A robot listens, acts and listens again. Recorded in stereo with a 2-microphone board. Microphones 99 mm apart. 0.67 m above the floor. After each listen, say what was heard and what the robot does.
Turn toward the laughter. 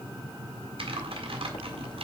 Keep listening.
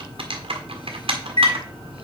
Keep listening.
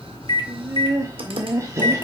The laughter: about 30° right or 150° right. Turn 30° right.
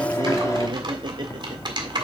So it is at 110° right. Turn 110° right.
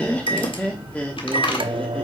The laughter is now 15° left. Turn 15° left.
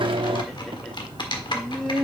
Facing the laughter.